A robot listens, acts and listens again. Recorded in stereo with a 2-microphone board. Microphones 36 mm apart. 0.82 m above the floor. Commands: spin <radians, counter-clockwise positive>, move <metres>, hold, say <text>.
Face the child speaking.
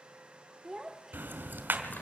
spin -0.52
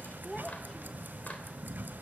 hold
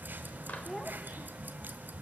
hold
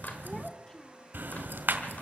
say I heard a child speaking, but can't make it out now. It was about 15° left or 135° right.